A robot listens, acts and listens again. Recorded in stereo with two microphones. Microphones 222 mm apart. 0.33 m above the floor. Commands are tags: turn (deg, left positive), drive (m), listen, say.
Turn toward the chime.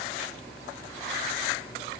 <listen/>
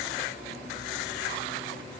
<listen/>
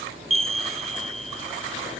<turn deg="-90"/>
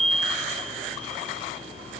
<say>Found it: a chime, straight ahead, 1 to 2 m away.</say>